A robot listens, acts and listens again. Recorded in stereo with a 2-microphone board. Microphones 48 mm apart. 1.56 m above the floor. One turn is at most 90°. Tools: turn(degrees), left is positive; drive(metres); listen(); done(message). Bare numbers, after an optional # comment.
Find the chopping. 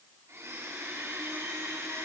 listen()
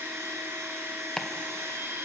# The chopping: about 15° left or 165° left.
turn(15)
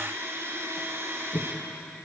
# So it is at 150° left.
turn(90)
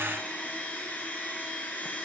# Nothing new. It was at 60° left.
turn(60)
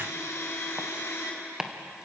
# The chopping is now 15° right.
turn(-15)
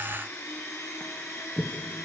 done("Found it: chopping, straight ahead.")